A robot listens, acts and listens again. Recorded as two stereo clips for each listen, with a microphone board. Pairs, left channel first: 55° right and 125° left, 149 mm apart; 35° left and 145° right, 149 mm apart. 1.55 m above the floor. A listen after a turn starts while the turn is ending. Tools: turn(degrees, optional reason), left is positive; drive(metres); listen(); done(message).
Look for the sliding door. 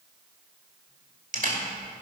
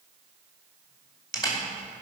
listen()
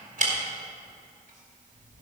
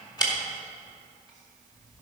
listen()
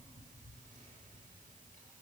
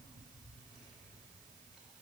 done("I can't make out a sliding door to turn to.")